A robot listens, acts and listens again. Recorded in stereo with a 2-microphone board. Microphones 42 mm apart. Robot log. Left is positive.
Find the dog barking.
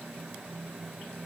cmd idle
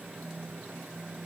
cmd idle
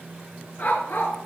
note: The dog barking: about 60° left or 120° left.
cmd yaw +60
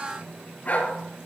note: So it is at 40° left.
cmd yaw +40
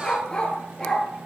note: The dog barking is now 10° left.
cmd yaw +10
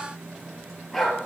end: Facing the dog barking, 2 to 4 m away.